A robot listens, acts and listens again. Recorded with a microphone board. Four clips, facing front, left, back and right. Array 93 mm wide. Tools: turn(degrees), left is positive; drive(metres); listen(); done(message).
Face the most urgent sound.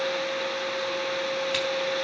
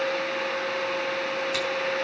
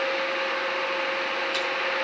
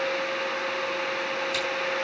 listen()
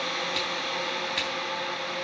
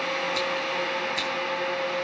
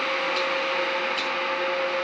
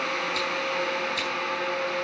listen()
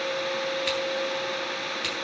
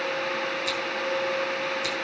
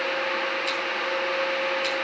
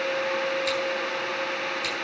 done("I can't make out anything urgent to turn to.")